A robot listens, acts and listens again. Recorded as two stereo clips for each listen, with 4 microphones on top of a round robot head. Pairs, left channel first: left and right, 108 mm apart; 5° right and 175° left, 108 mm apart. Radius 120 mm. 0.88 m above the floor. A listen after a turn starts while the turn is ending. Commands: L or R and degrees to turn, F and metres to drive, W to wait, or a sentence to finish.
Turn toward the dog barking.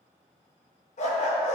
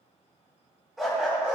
L95
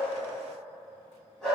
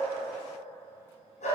Facing the dog barking.